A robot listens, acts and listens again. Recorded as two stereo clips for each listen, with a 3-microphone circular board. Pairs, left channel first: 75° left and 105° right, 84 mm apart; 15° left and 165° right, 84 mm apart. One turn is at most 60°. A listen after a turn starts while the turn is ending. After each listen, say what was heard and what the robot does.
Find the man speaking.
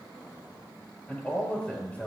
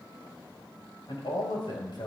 Facing the man speaking.